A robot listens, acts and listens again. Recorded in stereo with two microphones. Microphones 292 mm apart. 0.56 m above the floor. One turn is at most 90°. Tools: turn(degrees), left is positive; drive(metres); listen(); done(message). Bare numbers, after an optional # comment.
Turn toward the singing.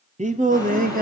# The singing: about 30° right or 150° right.
turn(-30)
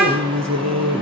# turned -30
# So it is at 110° right.
turn(-90)
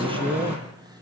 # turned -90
# The singing is now 15° right.
turn(-15)
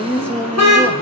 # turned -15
done("Found it: singing, straight ahead.")